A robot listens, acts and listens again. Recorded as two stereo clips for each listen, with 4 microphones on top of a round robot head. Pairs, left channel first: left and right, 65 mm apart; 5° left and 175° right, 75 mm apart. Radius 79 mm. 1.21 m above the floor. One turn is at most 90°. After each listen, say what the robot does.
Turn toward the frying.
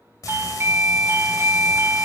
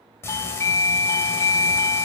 Turn 60° left.
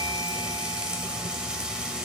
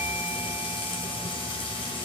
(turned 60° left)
Turn 15° right.
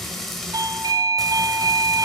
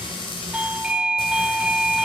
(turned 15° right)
Found it: frying, straight ahead.